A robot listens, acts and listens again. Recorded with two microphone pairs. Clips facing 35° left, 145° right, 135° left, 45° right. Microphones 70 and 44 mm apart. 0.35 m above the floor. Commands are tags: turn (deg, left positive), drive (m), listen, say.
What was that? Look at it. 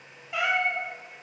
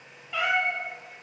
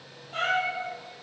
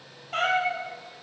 <turn deg="-35"/>
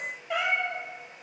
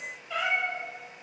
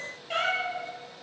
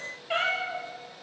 <turn deg="25"/>
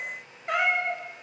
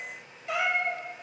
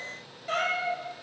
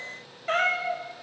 <say>Found it: a cat meowing, straight ahead, 1 to 2 m away.</say>